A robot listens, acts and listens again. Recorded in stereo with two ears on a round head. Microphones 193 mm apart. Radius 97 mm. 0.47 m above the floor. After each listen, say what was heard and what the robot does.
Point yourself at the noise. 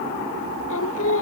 The singing: about 70° left or 110° left. Turn 70° left.
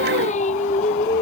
So it is at 35° left. Turn 35° left.
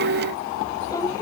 Keep listening.
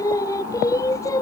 The singing is now 15° left. Turn 15° left.
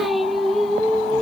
Facing the singing.